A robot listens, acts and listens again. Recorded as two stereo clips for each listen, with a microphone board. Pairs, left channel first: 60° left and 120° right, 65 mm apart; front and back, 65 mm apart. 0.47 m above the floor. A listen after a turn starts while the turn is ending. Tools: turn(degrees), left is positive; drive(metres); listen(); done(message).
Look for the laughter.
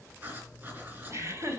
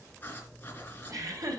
turn(degrees=-160)
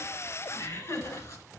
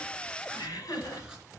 turn(degrees=15)
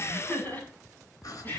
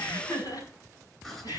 done("Found it: laughter, straight ahead, over 4 m away.")